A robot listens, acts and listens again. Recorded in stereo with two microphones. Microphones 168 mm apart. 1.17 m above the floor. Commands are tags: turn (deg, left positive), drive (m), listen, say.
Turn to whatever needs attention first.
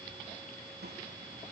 <listen/>
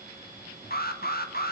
<turn deg="65"/>
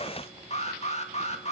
<turn deg="45"/>
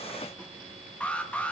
<turn deg="10"/>
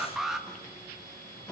<say>Found it: an alarm, straight ahead.</say>